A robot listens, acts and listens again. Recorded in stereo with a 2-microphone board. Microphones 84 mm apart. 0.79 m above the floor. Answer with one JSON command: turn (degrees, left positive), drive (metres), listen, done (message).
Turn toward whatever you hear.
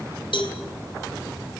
{"turn": 70}
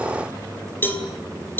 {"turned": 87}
{"turn": 20}
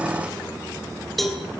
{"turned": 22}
{"done": "Facing the cowbell, 2 to 4 m away."}